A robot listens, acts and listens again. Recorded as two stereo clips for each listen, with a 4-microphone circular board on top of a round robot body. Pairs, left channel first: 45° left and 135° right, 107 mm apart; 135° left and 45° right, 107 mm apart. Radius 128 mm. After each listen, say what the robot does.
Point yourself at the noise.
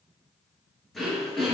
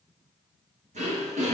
Turn 45° right.
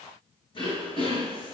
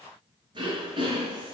Found it: throat clearing, straight ahead.